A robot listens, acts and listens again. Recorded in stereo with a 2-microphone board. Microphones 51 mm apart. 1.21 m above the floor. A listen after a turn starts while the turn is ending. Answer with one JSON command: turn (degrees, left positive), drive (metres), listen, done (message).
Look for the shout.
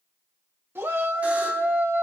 {"turn": -50}
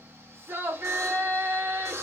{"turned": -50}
{"turn": -70}
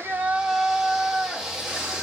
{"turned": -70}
{"turn": -10}
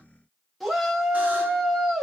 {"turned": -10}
{"done": "Found it: a shout, straight ahead, under 1 m away."}